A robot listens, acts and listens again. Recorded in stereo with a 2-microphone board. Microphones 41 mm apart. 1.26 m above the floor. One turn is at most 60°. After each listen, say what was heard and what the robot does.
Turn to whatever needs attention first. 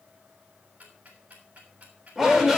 Turn 30° right.
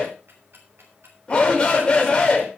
So it is at 25° left. Turn 25° left.
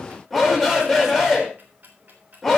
Facing the shout.